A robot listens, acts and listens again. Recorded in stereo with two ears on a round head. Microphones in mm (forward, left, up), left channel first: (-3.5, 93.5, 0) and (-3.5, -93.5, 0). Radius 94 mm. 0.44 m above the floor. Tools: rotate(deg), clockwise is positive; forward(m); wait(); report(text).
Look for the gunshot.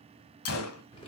rotate(-90)
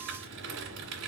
report("Facing where the gunshot came from. I can't hear it now.")